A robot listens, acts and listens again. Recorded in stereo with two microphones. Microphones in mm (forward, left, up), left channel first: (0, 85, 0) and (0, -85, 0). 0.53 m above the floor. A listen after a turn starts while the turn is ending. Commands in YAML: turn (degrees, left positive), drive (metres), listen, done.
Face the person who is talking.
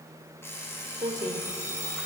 turn: -45
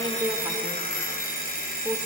listen: true
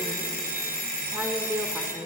turn: -15
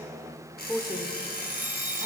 done: "Facing the woman speaking."